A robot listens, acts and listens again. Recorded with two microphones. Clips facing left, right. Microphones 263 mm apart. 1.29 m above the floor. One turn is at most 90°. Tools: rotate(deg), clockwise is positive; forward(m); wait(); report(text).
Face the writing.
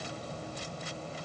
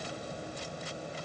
wait()
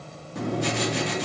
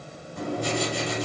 rotate(-90)
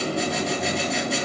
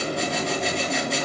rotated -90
report("Found it: writing, straight ahead.")